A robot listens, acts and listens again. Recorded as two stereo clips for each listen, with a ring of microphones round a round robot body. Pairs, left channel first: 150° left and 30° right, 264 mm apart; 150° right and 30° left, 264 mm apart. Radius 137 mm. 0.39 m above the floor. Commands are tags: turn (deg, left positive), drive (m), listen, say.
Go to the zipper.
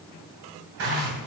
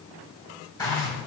<turn deg="-75"/>
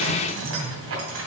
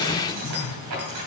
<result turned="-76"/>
<drive m="1.0"/>
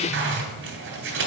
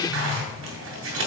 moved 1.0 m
<drive m="1.0"/>
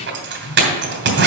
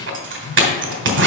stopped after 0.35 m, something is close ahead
<say>I am next to the zipper.</say>